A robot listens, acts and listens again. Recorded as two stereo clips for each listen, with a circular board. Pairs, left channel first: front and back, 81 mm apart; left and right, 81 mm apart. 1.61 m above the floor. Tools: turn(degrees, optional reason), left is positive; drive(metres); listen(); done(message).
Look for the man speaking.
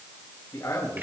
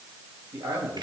turn(degrees=-50, reason="The man speaking: 50° right.")
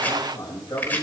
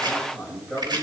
done("Facing the man speaking, over 4 m away.")